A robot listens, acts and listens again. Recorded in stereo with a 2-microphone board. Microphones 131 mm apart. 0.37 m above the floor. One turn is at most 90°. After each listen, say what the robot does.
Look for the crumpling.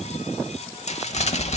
Turn 60° left.
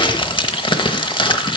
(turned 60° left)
Turn 45° left.
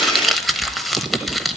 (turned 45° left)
Facing the crumpling.